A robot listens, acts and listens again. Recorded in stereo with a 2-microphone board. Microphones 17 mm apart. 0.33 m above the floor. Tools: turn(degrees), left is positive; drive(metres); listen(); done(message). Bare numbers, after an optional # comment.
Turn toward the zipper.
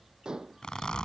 # The zipper: about 70° left or 110° left.
turn(70)
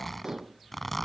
# So it is at 15° left.
turn(15)
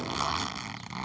done("Facing the zipper.")